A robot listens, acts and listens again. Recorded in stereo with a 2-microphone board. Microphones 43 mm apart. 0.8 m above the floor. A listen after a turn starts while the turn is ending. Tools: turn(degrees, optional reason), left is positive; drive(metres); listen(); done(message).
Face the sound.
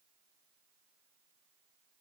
listen()
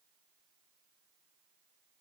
listen()
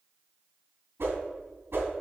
turn(degrees=-65, reason="The whoosh: about 65° right or 115° right.")
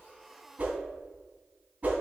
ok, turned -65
turn(degrees=-50, reason="So it is at 50° right.")
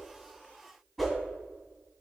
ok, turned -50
done("Facing the whoosh.")